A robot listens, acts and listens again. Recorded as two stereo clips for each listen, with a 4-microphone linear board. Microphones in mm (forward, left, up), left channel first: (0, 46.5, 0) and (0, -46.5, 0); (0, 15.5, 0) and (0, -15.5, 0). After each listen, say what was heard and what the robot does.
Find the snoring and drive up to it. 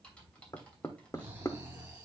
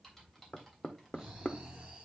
The snoring: about 20° right or 160° right. Turn 20° right.
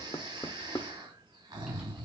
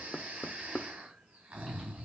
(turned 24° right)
So it is at 135° right. Turn 135° right.
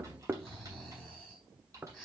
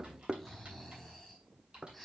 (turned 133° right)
Drive 1.0 m forward.
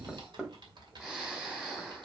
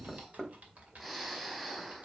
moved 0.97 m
The snoring is now 10° right. Turn 10° right.
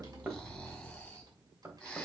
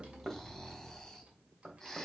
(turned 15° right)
Drive 1.0 m forward.
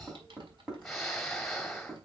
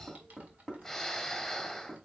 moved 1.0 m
Drive 1.0 m forward.
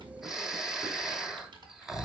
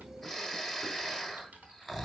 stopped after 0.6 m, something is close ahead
I am next to the snoring.